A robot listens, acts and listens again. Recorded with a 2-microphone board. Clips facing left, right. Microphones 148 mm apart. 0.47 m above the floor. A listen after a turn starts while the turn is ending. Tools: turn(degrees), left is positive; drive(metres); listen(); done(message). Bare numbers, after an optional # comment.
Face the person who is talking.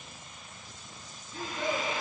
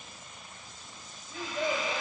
# The child speaking: about 55° right or 125° right.
turn(-55)
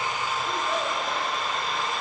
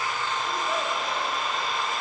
listen()
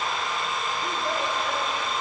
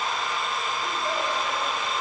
listen()
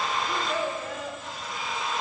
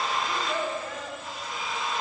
done("Found it: a child speaking, straight ahead, 2 to 4 m away.")